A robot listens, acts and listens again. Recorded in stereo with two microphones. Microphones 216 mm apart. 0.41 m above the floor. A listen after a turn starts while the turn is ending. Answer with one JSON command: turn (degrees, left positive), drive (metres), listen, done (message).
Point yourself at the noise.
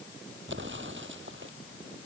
{"turn": -60}
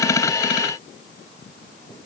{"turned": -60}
{"listen": true}
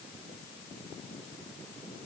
{"done": "I heard an explosion, but can't make it out now. It was about straight ahead or 60° right."}